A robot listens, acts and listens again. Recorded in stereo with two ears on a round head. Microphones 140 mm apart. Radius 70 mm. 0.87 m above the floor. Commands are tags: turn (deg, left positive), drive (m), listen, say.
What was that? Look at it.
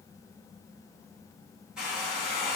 <turn deg="-30"/>
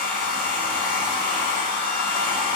<turn deg="-145"/>
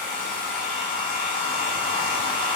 <turn deg="15"/>
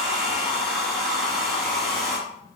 <say>Found it: a hair dryer, straight ahead, 1 to 2 m away.</say>